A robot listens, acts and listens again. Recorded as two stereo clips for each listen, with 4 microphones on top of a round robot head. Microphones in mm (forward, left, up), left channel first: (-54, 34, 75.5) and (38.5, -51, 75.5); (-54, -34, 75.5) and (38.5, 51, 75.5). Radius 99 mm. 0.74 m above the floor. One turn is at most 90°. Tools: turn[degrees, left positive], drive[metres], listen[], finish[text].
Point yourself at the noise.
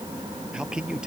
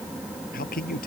Thought: The man speaking: 125° right.
Action: turn[-90]
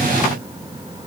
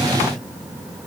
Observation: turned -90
Thought: Nothing new. It was at 35° right.
Action: turn[-35]
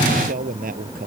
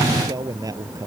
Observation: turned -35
Thought: The man speaking is now 25° right.
Action: turn[-25]
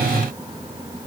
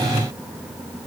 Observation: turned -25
Action: listen[]
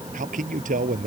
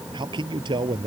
Thought: The man speaking is now 15° right.
Action: turn[-15]
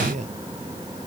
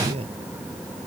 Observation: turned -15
Action: finish[Facing the man speaking.]